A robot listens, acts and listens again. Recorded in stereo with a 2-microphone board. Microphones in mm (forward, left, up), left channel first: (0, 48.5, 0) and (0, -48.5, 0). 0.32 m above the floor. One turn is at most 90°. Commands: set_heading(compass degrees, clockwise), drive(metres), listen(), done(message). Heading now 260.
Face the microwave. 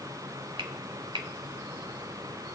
listen()
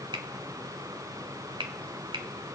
listen()
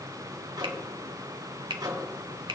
set_heading(300)
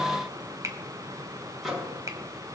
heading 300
done("Found it: a microwave, straight ahead, 2 to 4 m away.")